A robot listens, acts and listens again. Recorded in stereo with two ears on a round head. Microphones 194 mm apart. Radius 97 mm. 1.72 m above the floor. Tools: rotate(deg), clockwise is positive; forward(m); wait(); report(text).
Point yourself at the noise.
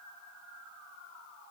wait()
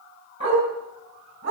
rotate(30)
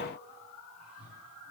wait()
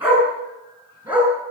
rotate(10)
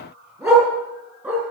report("Found it: a dog barking, straight ahead, over 4 m away.")